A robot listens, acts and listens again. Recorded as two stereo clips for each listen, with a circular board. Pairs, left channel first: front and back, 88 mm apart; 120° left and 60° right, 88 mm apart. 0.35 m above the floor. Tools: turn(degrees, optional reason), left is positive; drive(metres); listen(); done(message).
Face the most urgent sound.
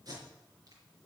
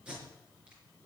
listen()
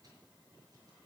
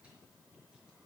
listen()
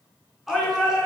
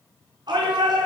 turn(degrees=-90, reason="The shout: 90° right.")
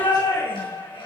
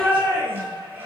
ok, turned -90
done("Facing the shout, over 4 m away.")